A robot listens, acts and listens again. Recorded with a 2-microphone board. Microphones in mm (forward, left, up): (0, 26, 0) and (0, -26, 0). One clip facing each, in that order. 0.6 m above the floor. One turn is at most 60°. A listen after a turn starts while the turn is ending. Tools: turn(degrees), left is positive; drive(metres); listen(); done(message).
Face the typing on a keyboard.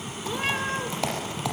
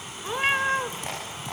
turn(degrees=60)
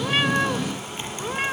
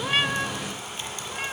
turn(degrees=25)
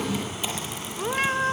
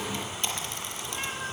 done("Found it: typing on a keyboard, straight ahead, over 4 m away.")